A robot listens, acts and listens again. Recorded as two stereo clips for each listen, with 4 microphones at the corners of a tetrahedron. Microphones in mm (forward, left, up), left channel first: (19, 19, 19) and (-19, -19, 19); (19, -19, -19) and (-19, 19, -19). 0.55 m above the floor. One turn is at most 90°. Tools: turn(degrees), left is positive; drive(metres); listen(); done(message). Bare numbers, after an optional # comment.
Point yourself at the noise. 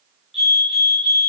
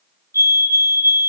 # The fire alarm: 140° left.
turn(90)
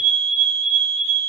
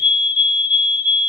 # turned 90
# The fire alarm is now 70° left.
turn(70)
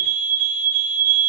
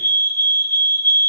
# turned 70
done("Facing the fire alarm, over 4 m away.")